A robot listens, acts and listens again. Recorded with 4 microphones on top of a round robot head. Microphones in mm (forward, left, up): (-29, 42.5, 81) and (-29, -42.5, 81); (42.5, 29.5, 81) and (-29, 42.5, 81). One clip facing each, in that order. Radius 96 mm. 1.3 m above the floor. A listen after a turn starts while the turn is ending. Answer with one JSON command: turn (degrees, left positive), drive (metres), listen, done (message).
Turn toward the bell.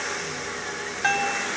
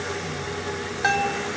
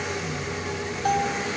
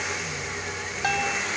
{"turn": -170}
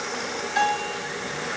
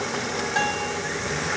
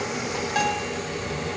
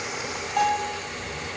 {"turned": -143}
{"turn": -25}
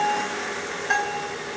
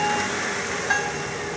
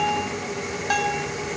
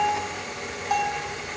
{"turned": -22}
{"done": "Found it: a bell, straight ahead, 2 to 4 m away."}